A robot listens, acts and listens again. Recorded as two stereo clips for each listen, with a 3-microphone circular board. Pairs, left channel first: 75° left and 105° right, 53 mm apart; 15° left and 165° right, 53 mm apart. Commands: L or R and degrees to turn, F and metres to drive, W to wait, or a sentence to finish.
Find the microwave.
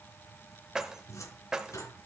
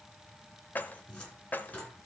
W
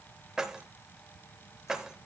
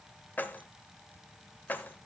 W
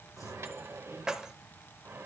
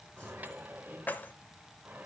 R115
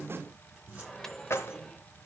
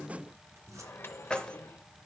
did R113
Facing the microwave.